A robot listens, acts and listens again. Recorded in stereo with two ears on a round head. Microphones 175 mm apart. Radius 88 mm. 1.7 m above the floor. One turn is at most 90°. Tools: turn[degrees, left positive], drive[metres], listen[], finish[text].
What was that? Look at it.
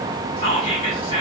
Thought: The whispering: about 25° left or 155° left.
Action: turn[25]
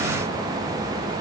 Action: listen[]
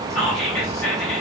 Action: finish[Found it: whispering, straight ahead, 1 to 2 m away.]